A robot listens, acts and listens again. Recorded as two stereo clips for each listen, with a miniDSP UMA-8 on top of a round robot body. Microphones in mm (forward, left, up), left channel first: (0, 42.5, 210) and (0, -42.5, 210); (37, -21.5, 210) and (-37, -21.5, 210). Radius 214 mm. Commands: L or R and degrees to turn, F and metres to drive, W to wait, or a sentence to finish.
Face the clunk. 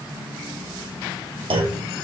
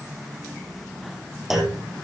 R95
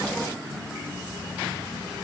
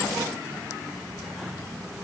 Facing where the clunk came from. I can't hear it now.